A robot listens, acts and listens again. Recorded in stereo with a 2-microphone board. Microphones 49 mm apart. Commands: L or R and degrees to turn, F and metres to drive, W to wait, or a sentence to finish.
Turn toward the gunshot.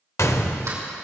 L75
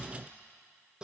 W
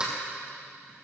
I heard a gunshot, but can't make it out now. It was about straight ahead or 30° left.